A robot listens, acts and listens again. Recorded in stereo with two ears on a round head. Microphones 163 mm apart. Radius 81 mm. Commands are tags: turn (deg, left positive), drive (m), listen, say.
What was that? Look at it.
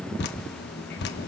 <turn deg="65"/>
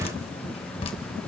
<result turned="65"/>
<turn deg="35"/>
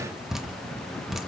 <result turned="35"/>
<say>Facing the dripping.</say>